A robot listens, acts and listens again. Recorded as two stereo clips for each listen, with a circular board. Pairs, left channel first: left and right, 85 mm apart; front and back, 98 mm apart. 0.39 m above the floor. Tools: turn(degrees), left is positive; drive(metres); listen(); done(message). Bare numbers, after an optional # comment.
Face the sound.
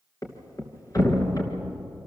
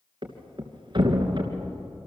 # The thud: 140° left.
turn(140)
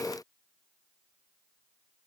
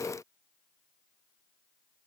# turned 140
done("Facing where the thud came from. I can't hear it now.")